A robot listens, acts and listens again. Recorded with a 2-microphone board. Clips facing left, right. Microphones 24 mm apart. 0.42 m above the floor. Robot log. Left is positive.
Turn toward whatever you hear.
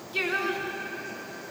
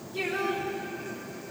note: The singing: about 75° left or 105° left.
cmd yaw +75
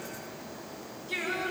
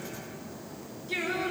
end: Facing the singing, over 4 m away.